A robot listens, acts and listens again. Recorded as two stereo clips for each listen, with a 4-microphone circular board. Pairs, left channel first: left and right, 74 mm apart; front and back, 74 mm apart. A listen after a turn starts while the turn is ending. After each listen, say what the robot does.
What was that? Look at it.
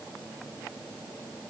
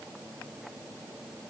Keep listening.
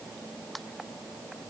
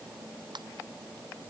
Turn 180° left.
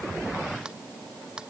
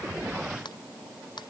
Turn 10° right.
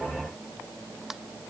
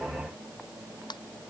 Facing the ringtone.